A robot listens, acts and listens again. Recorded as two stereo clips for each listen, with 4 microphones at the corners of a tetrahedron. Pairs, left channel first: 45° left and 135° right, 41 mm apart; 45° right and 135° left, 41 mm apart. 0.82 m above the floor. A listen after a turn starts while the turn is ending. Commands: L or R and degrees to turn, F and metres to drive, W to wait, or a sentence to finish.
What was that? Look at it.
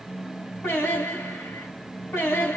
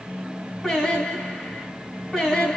L35
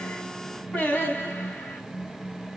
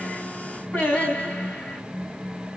R10
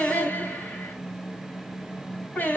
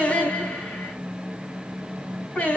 Facing the singing, over 4 m away.